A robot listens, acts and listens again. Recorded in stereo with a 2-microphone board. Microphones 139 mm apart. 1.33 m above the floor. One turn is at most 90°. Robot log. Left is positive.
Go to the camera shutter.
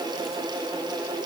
cmd idle
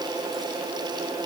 cmd idle
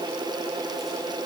end: I can't make out a camera shutter.